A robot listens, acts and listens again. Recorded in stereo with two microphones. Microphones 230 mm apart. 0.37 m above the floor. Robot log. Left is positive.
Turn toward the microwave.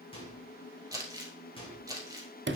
note: The microwave: about 25° left or 155° left.
cmd yaw +25
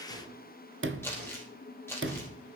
cmd idle
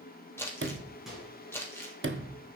end: Found it: a microwave, straight ahead.